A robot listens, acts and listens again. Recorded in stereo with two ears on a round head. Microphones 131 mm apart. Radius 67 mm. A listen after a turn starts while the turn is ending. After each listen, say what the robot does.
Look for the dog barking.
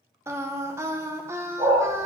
Turn 25° right.
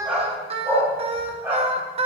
Turn 30° right.
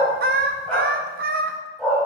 Found it: a dog barking, straight ahead, 2 to 4 m away.